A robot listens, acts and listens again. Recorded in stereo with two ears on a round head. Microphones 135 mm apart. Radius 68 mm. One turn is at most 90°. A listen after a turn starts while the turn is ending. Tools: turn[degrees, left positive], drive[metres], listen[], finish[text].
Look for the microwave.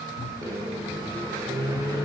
Thought: The microwave: about 20° right or 160° right.
Action: turn[-20]
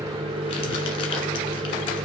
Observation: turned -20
Thought: So it is at 135° right.
Action: turn[-90]
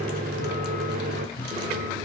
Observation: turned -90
Thought: The microwave is now 70° right.
Action: turn[-70]
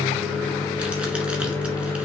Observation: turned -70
Thought: The microwave is now 15° left.
Action: turn[15]
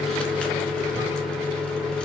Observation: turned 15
Action: finish[Found it: a microwave, straight ahead.]